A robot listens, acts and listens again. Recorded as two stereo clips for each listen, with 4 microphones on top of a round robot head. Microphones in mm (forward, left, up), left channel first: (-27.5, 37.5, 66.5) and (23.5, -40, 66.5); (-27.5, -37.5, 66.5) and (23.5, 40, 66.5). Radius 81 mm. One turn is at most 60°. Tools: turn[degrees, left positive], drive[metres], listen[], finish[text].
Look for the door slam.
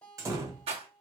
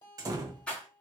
Action: finish[Found it: a door slam, straight ahead, under 1 m away.]